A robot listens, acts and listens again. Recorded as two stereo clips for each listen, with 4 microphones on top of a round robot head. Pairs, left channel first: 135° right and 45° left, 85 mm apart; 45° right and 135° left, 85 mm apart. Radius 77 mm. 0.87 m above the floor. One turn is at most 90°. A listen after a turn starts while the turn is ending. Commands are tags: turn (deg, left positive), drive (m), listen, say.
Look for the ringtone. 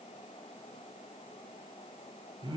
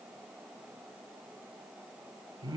<listen/>
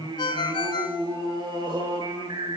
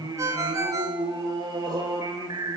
<turn deg="-90"/>
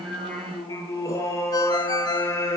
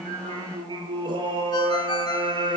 <turn deg="-80"/>
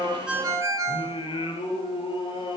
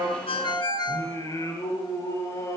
<say>Found it: a ringtone, straight ahead.</say>